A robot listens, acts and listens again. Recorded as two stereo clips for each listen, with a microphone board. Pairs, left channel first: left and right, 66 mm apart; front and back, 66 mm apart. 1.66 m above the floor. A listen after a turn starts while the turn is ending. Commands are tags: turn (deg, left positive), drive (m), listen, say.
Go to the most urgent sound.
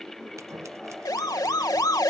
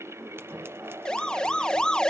<turn deg="75"/>
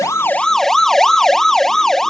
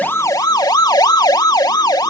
<drive m="1.0"/>
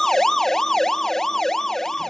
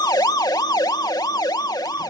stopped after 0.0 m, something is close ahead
<turn deg="10"/>
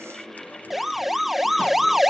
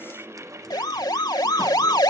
<say>Blocked. The siren is further on, straight ahead.</say>